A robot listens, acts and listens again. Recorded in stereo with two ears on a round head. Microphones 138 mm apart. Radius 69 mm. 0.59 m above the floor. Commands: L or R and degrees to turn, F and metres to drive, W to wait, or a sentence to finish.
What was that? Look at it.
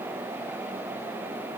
W
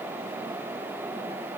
W
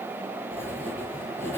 L15
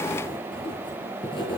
L145
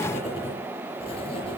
L35
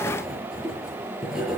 Found it: writing, straight ahead.